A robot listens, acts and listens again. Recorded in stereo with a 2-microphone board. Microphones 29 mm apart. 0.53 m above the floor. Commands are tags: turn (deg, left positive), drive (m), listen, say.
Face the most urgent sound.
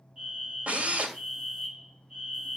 <turn deg="-35"/>
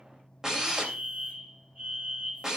<turn deg="-105"/>
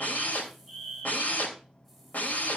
<turn deg="15"/>
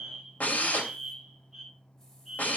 <say>Found it: a fire alarm, straight ahead, over 4 m away.</say>